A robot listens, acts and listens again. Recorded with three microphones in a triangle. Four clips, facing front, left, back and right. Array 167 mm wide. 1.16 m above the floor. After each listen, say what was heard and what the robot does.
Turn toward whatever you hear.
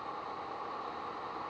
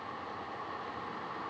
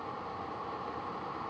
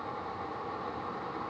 Keep listening.
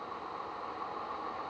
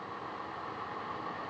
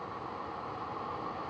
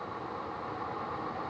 Keep listening.
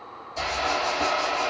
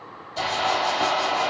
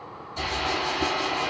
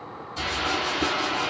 The hiss: 50° left. Turn 50° left.
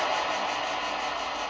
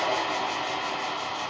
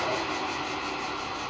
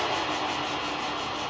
The hiss is now 15° left. Turn 15° left.
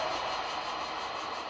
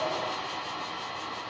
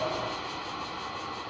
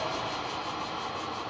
Facing the hiss, 2 to 4 m away.